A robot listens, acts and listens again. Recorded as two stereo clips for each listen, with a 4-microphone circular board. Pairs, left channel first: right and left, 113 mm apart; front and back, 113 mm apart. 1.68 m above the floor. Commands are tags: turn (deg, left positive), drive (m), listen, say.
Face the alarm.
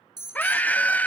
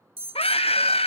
<turn deg="140"/>
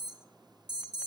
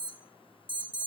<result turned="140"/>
<turn deg="40"/>
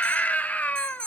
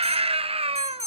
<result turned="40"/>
<say>Found it: an alarm, straight ahead, under 1 m away.</say>